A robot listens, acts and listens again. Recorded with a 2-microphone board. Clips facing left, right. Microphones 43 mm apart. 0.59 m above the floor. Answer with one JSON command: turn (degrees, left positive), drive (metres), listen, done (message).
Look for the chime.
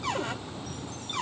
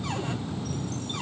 {"listen": true}
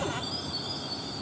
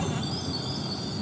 {"listen": true}
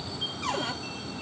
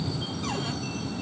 {"done": "I can't make out a chime to turn to."}